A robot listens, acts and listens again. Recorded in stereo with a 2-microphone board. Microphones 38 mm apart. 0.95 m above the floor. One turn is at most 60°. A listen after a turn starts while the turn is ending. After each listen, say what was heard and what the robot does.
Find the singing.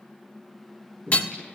The singing: about 20° left or 160° left. Turn 20° left.
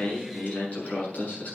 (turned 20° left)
So it is at 135° left. Turn 60° left.
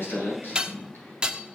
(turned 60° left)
The singing is now 90° left. Turn 60° left.
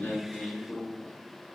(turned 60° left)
The singing is now 35° left. Turn 35° left.
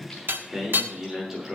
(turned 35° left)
Found it: singing, straight ahead.